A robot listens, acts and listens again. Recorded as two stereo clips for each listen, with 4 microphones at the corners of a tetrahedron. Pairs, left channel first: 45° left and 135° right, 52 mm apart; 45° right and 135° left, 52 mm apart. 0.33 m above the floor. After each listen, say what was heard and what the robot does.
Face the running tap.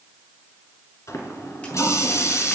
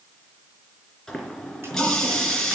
The running tap: 35° left. Turn 35° left.
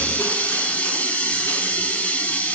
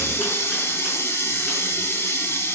The running tap is now 15° right. Turn 15° right.
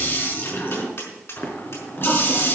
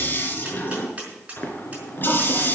Found it: a running tap, straight ahead.